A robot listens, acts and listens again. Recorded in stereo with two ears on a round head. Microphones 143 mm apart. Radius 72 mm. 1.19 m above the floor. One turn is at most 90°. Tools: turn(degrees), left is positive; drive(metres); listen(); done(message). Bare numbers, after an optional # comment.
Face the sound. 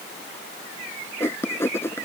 # The writing: about 15° left or 165° left.
turn(15)
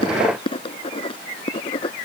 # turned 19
# So it is at 145° left.
turn(90)
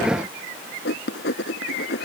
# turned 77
# The writing is now 70° left.
turn(70)
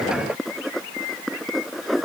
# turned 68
done("Facing the writing.")